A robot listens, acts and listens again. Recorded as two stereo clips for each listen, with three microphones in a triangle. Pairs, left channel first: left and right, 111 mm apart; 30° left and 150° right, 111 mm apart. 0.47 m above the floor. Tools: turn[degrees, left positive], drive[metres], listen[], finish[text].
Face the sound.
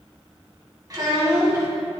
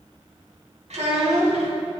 Thought: The child speaking: 150° right.
Action: turn[-150]
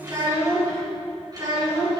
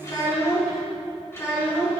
Thought: The child speaking is now 40° right.
Action: turn[-40]
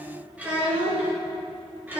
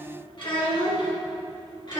Thought: The child speaking is now 15° right.
Action: turn[-15]
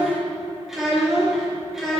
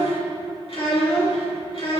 Action: finish[Found it: a child speaking, straight ahead.]